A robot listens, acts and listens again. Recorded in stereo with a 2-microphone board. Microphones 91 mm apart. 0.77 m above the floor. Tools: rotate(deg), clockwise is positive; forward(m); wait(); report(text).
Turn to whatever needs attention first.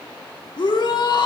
rotate(-55)
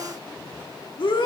rotate(-65)
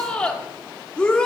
rotate(-10)
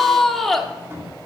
report("Found it: a shout, straight ahead, 1 to 2 m away.")